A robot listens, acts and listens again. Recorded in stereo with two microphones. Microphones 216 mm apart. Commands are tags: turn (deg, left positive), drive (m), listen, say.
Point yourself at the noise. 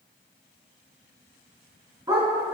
<turn deg="-20"/>
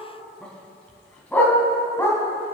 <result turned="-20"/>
<turn deg="15"/>
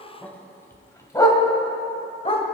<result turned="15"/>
<turn deg="25"/>
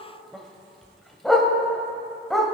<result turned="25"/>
<say>Found it: a dog barking, straight ahead.</say>